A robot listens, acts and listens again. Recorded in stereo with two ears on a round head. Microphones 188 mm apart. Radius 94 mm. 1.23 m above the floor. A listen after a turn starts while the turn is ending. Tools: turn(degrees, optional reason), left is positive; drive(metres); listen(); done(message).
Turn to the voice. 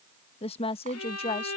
turn(degrees=30, reason="The woman speaking: about 30° left or 150° left.")
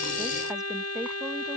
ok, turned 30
listen()
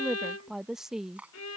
done("Found it: a woman speaking, straight ahead.")